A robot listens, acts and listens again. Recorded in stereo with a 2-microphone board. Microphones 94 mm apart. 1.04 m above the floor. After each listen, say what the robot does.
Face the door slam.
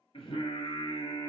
Keep listening.
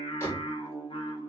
Turn 30° left.
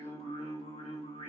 Keep listening.
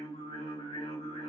I heard a door slam, but can't make it out now. It was about straight ahead or 120° left.